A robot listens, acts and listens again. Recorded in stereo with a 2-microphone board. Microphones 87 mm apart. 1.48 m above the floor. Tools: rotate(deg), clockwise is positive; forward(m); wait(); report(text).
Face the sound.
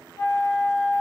rotate(-50)
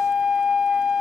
report("Facing the flute.")